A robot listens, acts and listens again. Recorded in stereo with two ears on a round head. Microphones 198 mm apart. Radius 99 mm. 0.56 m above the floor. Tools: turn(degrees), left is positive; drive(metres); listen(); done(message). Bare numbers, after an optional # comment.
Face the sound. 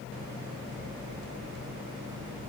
listen()
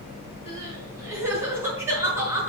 turn(-30)
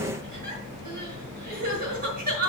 # So it is at 135° right.
turn(-135)
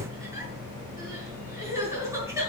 # The crying is now 15° right.
turn(-15)
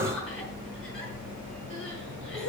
done("Facing the crying.")